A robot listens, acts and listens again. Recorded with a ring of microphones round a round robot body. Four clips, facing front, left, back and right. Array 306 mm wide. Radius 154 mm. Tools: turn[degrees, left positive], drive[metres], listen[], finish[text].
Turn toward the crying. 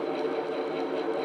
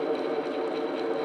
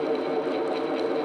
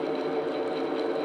Action: listen[]
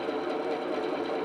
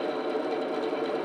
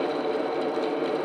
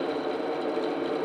Action: listen[]
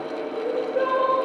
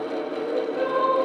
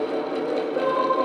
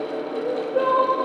Thought: The crying: 75° right.
Action: turn[-75]
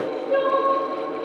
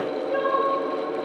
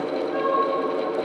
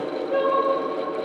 Action: finish[Found it: crying, straight ahead.]